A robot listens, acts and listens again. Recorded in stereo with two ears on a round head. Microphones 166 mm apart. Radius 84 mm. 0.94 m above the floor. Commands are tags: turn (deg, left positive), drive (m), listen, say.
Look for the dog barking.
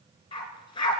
<turn deg="25"/>
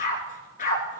<turn deg="130"/>
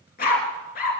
<turn deg="50"/>
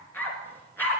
<turn deg="10"/>
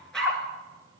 <say>Facing the dog barking, 2 to 4 m away.</say>